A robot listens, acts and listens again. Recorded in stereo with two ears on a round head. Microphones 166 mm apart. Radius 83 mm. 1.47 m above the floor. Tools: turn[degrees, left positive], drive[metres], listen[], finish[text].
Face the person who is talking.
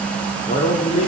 Thought: The man speaking: about 40° left or 140° left.
Action: turn[40]
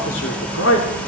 Thought: So it is at 105° left.
Action: turn[105]
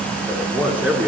Thought: The man speaking is now 10° right.
Action: turn[-10]
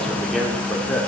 Action: finish[Found it: a man speaking, straight ahead.]